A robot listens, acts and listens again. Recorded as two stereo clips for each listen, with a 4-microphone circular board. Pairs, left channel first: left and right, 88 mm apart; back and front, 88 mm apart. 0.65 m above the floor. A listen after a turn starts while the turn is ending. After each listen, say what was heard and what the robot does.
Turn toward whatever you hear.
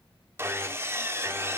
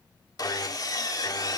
The sawing: 145° right. Turn 145° right.
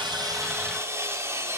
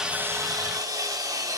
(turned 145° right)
The sawing is now 35° right. Turn 35° right.
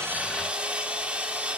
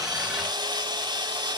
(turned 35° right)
The sawing is now 15° right. Turn 15° right.
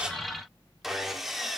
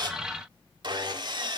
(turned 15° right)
Facing the sawing.